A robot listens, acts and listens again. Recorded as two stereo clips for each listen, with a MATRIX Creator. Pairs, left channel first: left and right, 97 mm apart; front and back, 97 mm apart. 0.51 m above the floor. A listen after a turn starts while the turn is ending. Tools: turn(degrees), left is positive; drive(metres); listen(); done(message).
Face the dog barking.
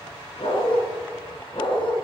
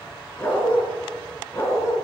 turn(degrees=55)
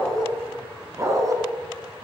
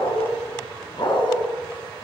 turn(degrees=-45)
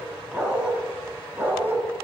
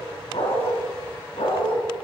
turn(degrees=-20)
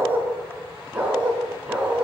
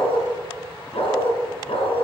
turn(degrees=-10)
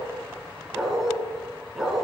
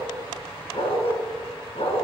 done("Found it: a dog barking, straight ahead, 2 to 4 m away.")